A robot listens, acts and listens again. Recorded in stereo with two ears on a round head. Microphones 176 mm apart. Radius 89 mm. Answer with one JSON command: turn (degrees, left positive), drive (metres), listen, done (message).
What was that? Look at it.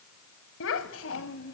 {"turn": 75}
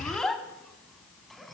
{"done": "Found it: a child speaking, straight ahead, 2 to 4 m away."}